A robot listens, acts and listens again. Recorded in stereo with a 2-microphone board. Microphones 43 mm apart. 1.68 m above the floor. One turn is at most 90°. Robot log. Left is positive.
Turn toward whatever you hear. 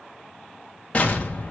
note: The explosion: about 30° left or 150° left.
cmd yaw +30
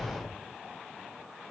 note: So it is at 120° left.
cmd yaw +90
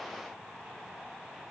note: Nothing new. It was at 30° left.
cmd yaw +30
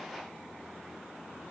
end: I heard an explosion from this way, but can't make it out now.